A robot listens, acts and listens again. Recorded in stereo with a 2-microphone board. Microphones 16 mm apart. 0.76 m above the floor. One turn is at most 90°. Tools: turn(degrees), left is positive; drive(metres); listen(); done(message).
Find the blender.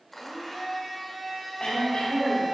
turn(degrees=20)
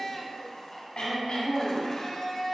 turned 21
turn(degrees=90)
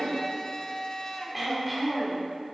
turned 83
turn(degrees=60)
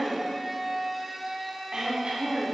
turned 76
turn(degrees=-15)
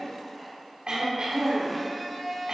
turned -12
done("Found it: a blender, straight ahead, 1 to 2 m away.")